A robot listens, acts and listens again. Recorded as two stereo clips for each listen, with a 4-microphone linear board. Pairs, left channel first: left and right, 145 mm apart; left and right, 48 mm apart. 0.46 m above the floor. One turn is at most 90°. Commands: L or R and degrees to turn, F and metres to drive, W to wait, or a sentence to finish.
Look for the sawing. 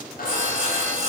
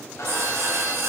R65
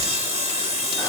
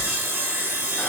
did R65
R45
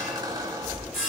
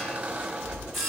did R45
Facing the sawing.